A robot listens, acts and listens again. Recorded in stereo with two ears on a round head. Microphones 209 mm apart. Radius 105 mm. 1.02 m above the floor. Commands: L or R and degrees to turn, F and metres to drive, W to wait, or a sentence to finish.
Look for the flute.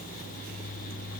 W
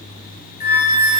L25
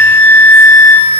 Found it: a flute, straight ahead, 1 to 2 m away.